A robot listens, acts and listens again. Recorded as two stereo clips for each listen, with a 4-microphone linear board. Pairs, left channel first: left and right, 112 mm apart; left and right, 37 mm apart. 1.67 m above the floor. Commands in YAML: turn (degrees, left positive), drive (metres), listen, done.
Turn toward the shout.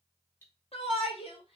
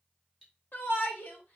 turn: 60
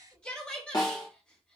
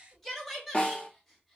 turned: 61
turn: 10
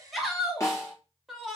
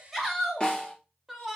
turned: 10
done: "Found it: a shout, straight ahead."